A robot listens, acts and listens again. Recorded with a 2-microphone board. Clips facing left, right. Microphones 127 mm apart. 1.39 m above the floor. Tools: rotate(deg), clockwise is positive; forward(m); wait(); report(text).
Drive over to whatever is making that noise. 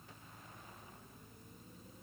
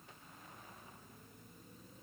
wait()
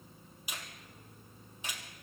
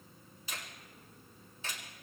rotate(-30)
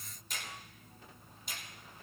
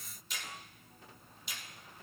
rotate(-135)
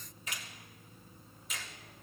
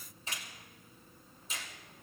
rotate(30)
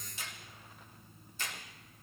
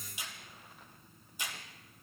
rotate(15)
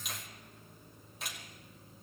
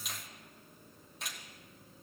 forward(1.0)
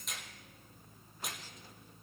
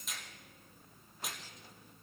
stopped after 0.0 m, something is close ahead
report("Something is in my way. I am facing the finger snap but have not reached it.")